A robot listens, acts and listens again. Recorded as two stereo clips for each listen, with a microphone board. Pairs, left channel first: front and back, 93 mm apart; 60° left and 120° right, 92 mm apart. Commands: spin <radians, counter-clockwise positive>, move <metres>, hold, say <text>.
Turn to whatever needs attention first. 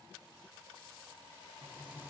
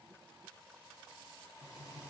hold
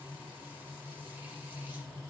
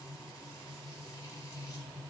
hold
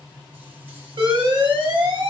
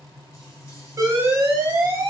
spin -2.97
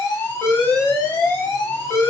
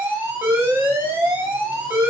spin -1.05
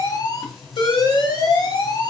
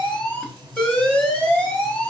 spin -0.26
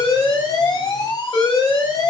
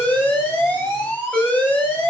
say Found it: an alarm, straight ahead.